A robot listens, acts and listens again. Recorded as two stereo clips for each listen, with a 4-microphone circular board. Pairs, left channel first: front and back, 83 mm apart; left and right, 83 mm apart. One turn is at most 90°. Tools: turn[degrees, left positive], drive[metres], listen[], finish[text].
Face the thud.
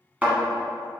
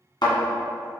Thought: The thud: 110° left.
Action: turn[90]
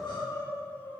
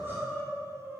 Thought: Nothing new. It was at 20° left.
Action: turn[20]
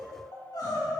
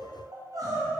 Action: finish[I heard a thud from this way, but can't make it out now.]